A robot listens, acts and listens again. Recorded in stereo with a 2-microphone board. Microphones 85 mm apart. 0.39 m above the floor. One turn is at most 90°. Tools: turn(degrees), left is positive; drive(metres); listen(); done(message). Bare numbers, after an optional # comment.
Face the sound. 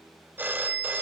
# The phone ringing: about 20° right or 160° right.
turn(-20)
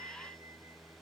listen()
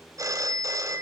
# So it is at 135° right.
turn(-90)
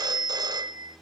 # The phone ringing is now 55° right.
turn(-55)
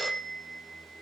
done("Facing the phone ringing.")